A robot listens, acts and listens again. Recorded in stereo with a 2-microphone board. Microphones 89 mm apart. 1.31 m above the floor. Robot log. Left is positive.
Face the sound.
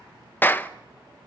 note: The clap: about 20° left or 160° left.
cmd yaw +20
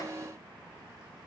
cmd idle
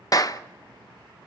note: So it is at 135° left.
cmd yaw +135
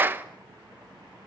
note: The clap is now 20° right.
cmd yaw -20
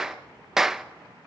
end: Facing the clap, under 1 m away.